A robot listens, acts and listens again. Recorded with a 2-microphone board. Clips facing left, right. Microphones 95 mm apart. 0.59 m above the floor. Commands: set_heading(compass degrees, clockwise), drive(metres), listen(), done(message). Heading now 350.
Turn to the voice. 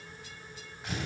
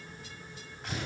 listen()
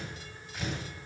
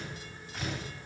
listen()
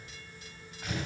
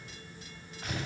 done("I can't make out anyone speaking to turn to.")